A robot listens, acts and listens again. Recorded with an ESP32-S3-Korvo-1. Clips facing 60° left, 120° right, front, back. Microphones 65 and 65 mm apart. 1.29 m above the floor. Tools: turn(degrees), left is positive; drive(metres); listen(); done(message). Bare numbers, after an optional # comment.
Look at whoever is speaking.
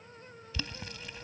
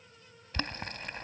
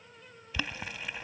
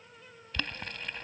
listen()
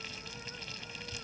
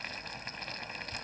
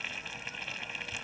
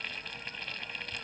listen()
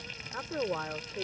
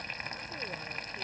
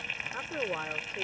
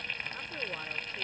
# The woman speaking: 60° left.
turn(60)
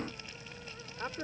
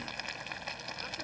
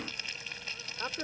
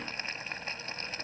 # The woman speaking is now 10° left.
turn(10)
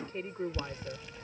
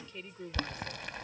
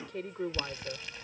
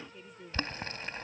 # The woman speaking is now 10° left.
turn(10)
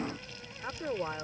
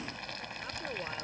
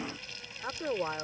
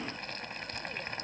done("Facing the woman speaking.")